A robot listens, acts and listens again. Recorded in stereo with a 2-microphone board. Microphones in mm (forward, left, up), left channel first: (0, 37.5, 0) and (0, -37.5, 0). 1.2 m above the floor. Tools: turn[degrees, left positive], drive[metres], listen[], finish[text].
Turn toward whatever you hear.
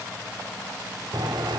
Thought: The writing: about 70° right or 110° right.
Action: turn[-70]
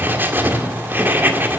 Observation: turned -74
Thought: So it is at 25° right.
Action: turn[-25]
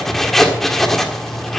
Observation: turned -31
Action: finish[Facing the writing, 1 to 2 m away.]